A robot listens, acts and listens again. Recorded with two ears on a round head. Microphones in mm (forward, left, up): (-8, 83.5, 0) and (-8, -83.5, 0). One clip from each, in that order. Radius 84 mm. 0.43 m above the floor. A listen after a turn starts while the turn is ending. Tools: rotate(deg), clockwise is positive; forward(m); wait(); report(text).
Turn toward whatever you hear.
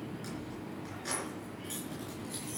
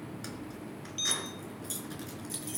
rotate(35)
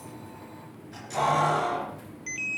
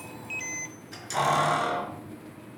rotate(120)
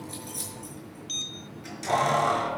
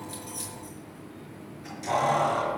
rotate(-15)
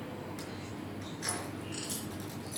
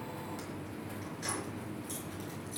wait()
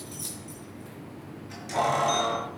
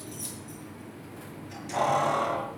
report("Found it: keys jangling, straight ahead, over 4 m away.")